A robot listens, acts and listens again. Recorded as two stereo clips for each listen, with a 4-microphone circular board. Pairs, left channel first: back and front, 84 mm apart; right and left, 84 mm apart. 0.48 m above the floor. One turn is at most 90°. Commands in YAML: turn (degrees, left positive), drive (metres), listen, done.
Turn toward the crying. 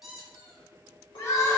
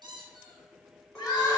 turn: -90
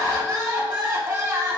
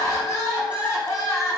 turn: -45
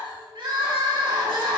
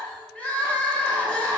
turn: -20
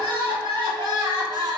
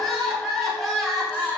done: "Found it: crying, straight ahead, under 1 m away."